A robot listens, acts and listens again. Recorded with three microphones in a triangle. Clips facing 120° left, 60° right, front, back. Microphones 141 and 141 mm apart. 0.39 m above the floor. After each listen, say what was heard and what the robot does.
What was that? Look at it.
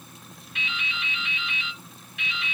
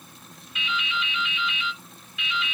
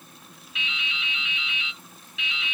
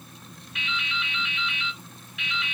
The dripping: 150° left. Turn 150° left.
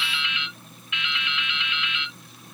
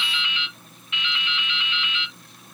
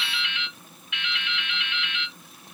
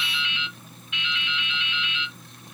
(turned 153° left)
Found it: dripping, straight ahead.